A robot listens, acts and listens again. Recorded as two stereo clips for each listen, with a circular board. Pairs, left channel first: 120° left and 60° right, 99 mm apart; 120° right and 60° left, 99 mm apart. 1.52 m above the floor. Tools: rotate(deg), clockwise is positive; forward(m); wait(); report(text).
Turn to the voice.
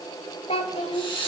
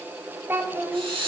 rotate(-125)
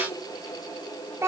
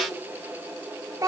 report("Facing the child speaking, 1 to 2 m away.")